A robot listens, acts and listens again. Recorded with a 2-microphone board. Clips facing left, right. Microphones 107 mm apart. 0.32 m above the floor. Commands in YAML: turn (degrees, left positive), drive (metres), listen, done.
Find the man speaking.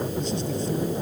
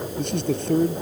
turn: -70
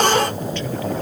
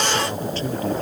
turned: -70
listen: true
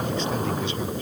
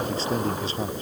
turn: -35
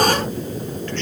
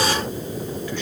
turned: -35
listen: true
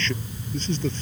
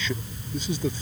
turn: -10
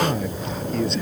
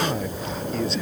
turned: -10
done: "Found it: a man speaking, straight ahead."